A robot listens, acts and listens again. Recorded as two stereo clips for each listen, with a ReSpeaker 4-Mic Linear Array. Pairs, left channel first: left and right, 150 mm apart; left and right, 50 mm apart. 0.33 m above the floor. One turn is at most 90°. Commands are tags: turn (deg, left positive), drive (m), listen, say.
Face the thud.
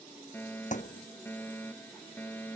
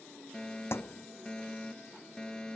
<turn deg="55"/>
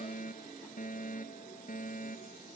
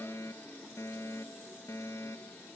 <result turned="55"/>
<listen/>
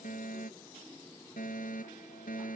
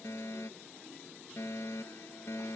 <say>I heard a thud, but can't make it out now. It was about straight ahead or 70° left.</say>